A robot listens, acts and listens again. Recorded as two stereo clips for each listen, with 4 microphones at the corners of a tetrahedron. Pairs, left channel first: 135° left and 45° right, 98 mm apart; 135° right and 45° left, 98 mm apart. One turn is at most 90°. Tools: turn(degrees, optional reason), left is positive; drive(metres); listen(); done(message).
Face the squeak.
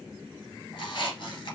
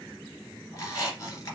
turn(degrees=90, reason="The squeak: 170° left.")
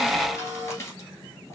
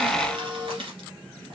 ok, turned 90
turn(degrees=75, reason="The squeak is now 75° left.")
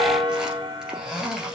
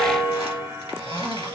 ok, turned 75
turn(degrees=40, reason="The squeak is now 40° left.")
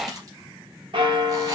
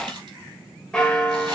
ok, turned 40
done("Facing the squeak.")